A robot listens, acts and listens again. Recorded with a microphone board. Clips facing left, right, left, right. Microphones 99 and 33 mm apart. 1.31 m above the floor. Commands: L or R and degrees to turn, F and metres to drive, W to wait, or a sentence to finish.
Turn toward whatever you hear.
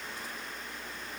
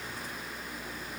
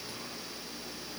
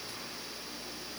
W
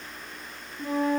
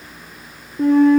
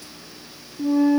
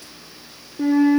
R65
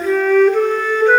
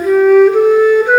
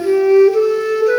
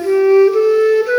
R15
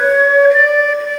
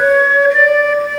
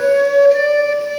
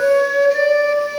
Facing the flute, 2 to 4 m away.